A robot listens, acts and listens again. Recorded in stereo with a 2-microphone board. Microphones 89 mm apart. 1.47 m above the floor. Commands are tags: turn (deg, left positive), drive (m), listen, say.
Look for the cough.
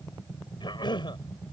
<turn deg="50"/>
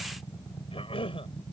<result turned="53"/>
<turn deg="75"/>
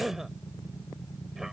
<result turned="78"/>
<say>Found it: a cough, straight ahead.</say>